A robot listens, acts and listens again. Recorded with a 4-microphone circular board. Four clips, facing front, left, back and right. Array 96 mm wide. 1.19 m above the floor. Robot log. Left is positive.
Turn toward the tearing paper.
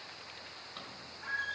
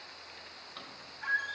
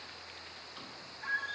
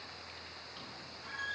cmd idle
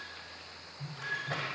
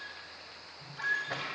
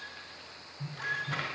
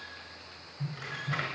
note: The tearing paper: 105° right.
cmd yaw -105
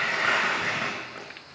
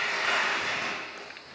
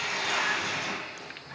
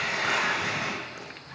end: Found it: tearing paper, straight ahead, over 4 m away.